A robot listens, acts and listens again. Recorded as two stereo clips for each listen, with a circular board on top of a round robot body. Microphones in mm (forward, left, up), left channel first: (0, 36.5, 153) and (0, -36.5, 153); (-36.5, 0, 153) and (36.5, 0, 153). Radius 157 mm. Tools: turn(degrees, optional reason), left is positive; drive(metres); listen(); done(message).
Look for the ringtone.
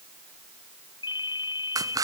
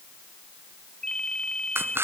turn(degrees=100, reason="The ringtone: 100° left.")
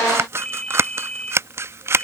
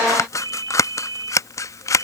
turn(degrees=15, reason="The ringtone is now 15° left.")
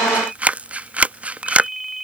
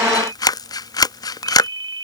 done("Facing the ringtone.")